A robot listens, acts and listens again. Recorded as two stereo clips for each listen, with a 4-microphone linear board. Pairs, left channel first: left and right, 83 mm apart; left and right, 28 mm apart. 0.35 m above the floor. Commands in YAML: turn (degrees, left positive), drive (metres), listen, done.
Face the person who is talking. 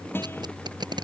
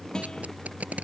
listen: true
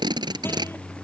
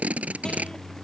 listen: true
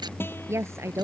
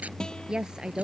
turn: -35
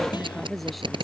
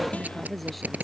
listen: true
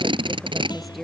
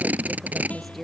listen: true
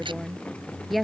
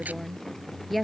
done: "Found it: a woman speaking, straight ahead."